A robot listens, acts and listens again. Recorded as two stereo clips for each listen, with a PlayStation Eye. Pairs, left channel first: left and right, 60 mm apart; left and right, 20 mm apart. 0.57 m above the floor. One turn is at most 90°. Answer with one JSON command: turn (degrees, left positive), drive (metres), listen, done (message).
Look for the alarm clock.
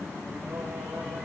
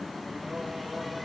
{"listen": true}
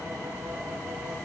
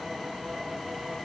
{"listen": true}
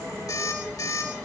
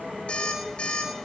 {"turn": 90}
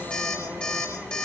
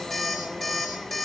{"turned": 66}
{"turn": 20}
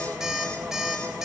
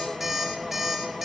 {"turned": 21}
{"done": "Facing the alarm clock, over 4 m away."}